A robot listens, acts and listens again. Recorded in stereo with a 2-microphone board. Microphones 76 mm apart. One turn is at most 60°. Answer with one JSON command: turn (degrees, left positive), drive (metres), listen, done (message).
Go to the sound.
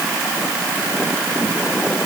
{"listen": true}
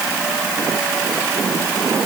{"listen": true}
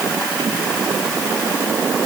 {"done": "I can't make out anything to turn to."}